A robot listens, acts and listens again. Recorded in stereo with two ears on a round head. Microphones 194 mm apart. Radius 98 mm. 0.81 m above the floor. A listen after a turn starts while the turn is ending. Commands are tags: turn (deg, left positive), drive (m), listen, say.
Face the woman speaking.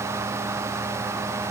<listen/>
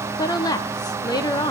<turn deg="20"/>
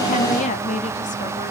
<turn deg="135"/>
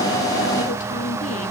<listen/>
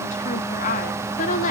<turn deg="45"/>
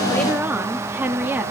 <turn deg="-10"/>
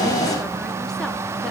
<listen/>
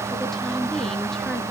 <listen/>
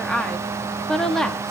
<say>Facing the woman speaking, 1 to 2 m away.</say>